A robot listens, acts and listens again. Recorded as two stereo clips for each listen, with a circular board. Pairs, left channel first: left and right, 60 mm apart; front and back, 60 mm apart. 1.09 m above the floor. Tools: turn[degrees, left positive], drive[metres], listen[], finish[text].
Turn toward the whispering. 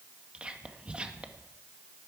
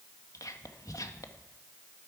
Thought: The whispering: 20° right.
Action: turn[-20]
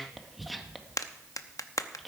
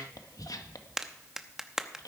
Action: finish[Facing the whispering, 1 to 2 m away.]